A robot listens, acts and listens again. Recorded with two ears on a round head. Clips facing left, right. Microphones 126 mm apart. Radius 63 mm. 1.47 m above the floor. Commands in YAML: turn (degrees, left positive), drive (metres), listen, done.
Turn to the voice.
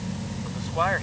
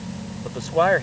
turn: -55
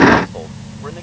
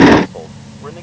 listen: true
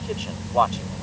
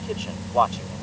done: "Facing the man speaking."